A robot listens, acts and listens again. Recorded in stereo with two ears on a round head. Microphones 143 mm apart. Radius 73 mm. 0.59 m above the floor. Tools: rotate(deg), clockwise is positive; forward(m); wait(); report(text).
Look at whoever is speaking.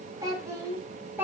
rotate(30)
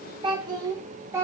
rotate(15)
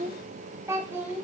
rotate(30)
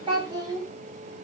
rotate(155)
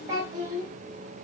rotate(20)
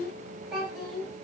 report("Facing the child speaking.")